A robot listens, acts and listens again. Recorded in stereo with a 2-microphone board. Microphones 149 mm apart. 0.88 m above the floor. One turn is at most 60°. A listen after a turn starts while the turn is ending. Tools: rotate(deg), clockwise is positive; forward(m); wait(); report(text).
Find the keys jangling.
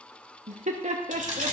rotate(60)
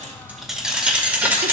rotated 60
rotate(15)
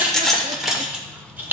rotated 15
rotate(15)
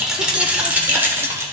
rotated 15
rotate(20)
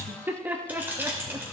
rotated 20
rotate(15)
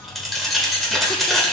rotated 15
report("Found it: keys jangling, straight ahead.")